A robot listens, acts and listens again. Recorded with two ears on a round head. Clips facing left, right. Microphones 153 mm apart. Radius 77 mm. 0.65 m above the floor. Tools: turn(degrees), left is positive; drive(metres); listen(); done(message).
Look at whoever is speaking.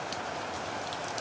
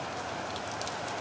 listen()
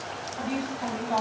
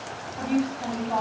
turn(degrees=30)
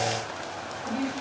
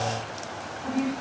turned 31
turn(degrees=-25)
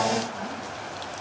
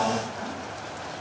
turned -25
listen()
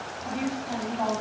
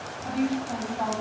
done("Facing the woman speaking, 1 to 2 m away.")